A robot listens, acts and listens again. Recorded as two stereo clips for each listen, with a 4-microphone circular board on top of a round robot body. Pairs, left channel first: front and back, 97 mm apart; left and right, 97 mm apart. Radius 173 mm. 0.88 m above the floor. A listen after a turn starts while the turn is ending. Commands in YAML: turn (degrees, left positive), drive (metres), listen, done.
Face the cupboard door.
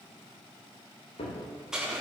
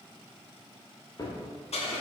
turn: 35
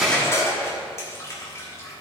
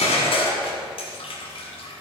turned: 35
listen: true
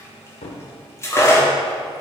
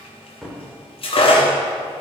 done: "Facing the cupboard door, 1 to 2 m away."